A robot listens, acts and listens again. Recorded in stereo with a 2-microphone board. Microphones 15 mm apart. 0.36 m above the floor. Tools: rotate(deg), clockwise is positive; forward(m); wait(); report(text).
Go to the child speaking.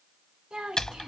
rotate(65)
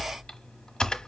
wait()
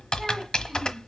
wait()
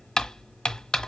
report("I heard a child speaking, but can't make it out now. It was about straight ahead or 50° right. I did not reach it.")